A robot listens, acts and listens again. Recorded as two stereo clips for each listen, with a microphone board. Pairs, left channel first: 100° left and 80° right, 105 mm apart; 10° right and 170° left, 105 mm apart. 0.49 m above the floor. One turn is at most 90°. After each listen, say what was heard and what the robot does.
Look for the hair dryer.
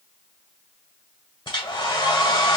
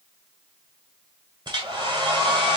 The hair dryer: 130° left. Turn 90° left.
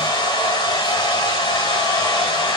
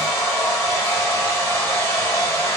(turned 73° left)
The hair dryer is now 55° left. Turn 55° left.
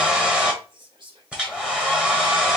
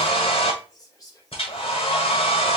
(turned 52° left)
Facing the hair dryer.